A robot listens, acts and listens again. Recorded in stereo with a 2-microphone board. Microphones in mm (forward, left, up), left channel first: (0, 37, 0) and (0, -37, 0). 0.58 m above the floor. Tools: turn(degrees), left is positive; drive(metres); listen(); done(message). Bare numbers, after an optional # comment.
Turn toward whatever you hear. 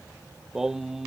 turn(-30)
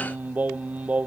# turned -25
# The singing: about 20° right or 160° right.
turn(-20)
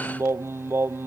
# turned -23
# So it is at 150° right.
turn(-150)
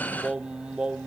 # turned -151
# The singing is now 15° right.
turn(-15)
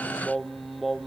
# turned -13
done("Found it: singing, straight ahead.")